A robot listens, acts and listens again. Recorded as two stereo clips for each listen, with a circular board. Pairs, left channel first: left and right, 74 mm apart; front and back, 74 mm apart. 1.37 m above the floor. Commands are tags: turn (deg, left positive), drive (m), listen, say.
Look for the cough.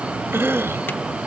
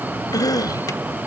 <turn deg="-30"/>
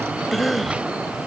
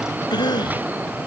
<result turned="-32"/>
<say>Found it: a cough, straight ahead.</say>